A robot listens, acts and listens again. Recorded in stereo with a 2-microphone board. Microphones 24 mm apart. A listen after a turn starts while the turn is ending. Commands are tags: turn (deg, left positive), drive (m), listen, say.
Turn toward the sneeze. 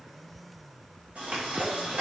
<turn deg="-65"/>
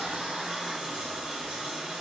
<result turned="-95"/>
<listen/>
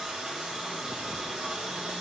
<say>I heard a sneeze, but can't make it out now. It was about 20° right or 30° left.</say>